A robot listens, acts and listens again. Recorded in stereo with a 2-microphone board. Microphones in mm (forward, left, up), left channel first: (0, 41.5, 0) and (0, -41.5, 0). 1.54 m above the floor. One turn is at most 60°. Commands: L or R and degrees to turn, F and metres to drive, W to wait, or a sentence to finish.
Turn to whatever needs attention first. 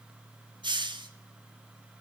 W
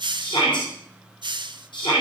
L60
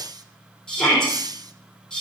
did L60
L10
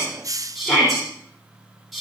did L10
Found it: a shout, straight ahead, over 4 m away.